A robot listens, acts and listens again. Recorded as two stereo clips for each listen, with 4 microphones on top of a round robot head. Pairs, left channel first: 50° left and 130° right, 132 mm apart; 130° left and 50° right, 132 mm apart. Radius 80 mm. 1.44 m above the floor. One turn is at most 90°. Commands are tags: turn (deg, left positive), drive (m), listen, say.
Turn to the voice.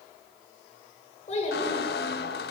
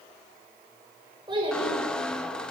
<say>Found it: a child speaking, straight ahead, over 4 m away.</say>